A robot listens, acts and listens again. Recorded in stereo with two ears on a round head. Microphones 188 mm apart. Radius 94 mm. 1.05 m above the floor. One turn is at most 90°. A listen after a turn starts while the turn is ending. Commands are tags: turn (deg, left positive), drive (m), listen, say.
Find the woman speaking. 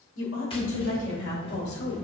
<turn deg="55"/>
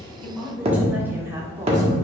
<turn deg="-15"/>
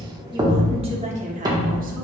<turn deg="-35"/>
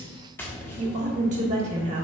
<turn deg="-35"/>
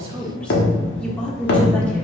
<say>Found it: a woman speaking, straight ahead.</say>